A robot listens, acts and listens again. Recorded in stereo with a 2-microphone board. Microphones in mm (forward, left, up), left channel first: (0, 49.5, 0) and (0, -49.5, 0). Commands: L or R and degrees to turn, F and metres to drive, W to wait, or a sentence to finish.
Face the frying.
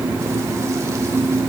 W
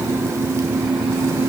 W
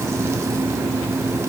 I can't make out frying.